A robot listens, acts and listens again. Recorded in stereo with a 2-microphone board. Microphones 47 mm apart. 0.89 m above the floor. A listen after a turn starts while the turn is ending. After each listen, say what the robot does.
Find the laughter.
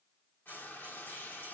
Keep listening.
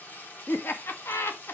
Turn 60° left.
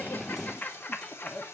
Turn 45° left.
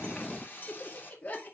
Turn 35° left.
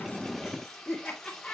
Found it: laughter, straight ahead.